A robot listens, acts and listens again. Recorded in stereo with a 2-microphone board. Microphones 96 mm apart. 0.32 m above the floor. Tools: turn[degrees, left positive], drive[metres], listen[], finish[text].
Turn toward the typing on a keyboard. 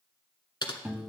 Thought: The typing on a keyboard: about 55° left or 125° left.
Action: turn[55]
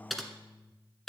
Action: finish[Facing the typing on a keyboard, 1 to 2 m away.]